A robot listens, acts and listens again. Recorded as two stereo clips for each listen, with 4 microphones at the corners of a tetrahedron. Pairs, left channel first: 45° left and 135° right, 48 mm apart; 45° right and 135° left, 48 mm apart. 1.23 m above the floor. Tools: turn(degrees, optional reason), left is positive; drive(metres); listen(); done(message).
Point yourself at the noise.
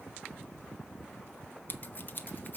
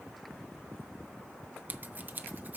turn(degrees=85, reason="The scissors: 85° left.")
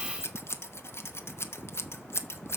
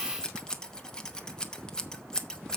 turn(degrees=30, reason="The scissors is now 30° left.")
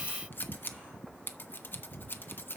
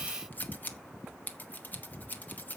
done("Found it: scissors, straight ahead, under 1 m away.")